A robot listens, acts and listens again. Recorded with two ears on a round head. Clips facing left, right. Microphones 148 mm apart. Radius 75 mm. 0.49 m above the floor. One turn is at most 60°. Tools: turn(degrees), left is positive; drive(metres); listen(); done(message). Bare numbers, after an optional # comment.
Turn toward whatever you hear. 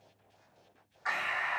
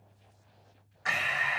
# The breathing: about 30° right or 150° right.
turn(-30)
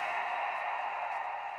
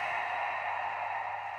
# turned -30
done("Facing the breathing, under 1 m away.")